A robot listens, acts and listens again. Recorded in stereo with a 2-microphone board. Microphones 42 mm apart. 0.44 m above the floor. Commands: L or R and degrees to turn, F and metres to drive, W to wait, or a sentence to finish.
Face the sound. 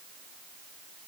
W
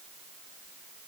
W
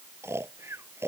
R90
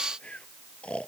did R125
L25
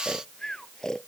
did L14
L15
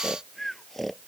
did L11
Found it: snoring, straight ahead.